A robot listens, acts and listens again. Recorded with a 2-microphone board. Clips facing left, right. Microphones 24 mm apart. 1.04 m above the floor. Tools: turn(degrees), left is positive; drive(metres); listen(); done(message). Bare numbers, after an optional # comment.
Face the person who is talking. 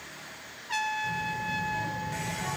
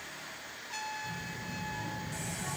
# The child speaking: about 40° left or 140° left.
turn(40)
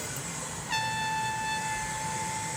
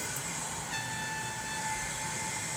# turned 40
# So it is at 95° left.
turn(95)
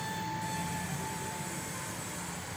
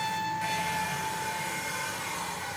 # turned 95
listen()
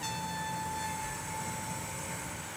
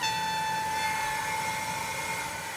# The child speaking is now 15° right.
turn(-15)
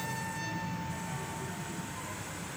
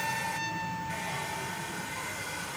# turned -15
done("Found it: a child speaking, straight ahead, over 4 m away.")